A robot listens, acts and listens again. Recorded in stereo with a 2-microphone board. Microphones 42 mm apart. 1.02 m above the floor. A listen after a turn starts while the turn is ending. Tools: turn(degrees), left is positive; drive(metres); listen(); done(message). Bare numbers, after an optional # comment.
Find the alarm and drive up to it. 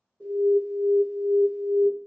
# The alarm: about 35° left or 145° left.
turn(35)
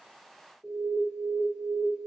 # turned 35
drive(1.0)
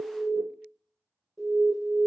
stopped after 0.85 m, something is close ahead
done("I am next to the alarm.")